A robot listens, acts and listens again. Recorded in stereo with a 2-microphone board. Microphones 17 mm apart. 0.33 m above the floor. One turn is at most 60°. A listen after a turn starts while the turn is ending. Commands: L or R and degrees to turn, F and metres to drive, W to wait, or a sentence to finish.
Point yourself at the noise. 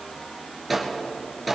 R30
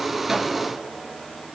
W
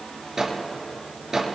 R60
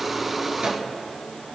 R60
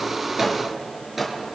R20
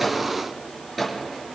Found it: a microwave, straight ahead.